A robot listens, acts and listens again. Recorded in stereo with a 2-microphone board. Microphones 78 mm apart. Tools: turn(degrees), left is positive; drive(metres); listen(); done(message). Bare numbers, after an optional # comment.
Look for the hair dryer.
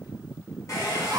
# The hair dryer: about 45° left or 135° left.
turn(45)
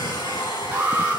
# So it is at 90° left.
turn(90)
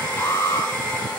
# The hair dryer is now 20° left.
turn(20)
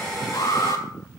done("Facing the hair dryer.")